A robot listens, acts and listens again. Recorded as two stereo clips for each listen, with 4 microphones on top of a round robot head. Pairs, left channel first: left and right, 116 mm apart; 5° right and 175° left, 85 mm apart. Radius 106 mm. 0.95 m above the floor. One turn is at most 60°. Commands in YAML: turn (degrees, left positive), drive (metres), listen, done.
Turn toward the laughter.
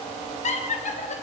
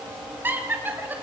turn: 60
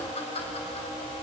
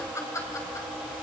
turn: 50
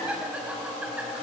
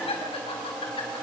turn: -10
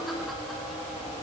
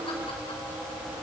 listen: true
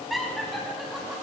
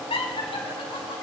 done: "Facing the laughter, over 4 m away."